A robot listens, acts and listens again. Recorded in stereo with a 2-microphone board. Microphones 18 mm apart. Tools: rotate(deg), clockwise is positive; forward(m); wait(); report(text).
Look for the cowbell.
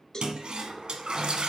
rotate(-30)
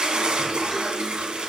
wait()
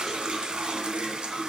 wait()
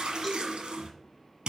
report("I heard a cowbell, but can't make it out now. It was about straight ahead or 120° left.")